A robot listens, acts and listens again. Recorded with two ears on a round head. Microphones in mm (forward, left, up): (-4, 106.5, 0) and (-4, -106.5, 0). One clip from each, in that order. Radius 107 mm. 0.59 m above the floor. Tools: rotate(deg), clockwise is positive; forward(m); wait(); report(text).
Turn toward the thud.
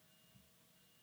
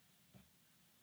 wait()
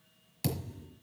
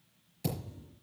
rotate(-40)
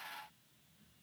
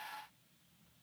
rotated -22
wait()
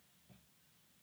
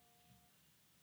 report("I heard a thud, but can't make it out now. It was about 20° left or 120° left.")